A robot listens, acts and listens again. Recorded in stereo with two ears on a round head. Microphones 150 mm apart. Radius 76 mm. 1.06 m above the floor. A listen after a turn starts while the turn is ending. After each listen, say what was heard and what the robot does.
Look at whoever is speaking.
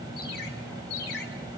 Keep listening.
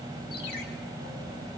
Keep listening.
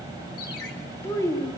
The child speaking: about 20° left or 160° left. Turn 20° left.
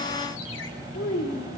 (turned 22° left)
So it is at 120° left. Turn 120° left.
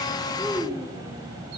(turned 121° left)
The child speaking is now 10° right. Turn 10° right.
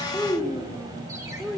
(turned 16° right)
Found it: a child speaking, straight ahead, 2 to 4 m away.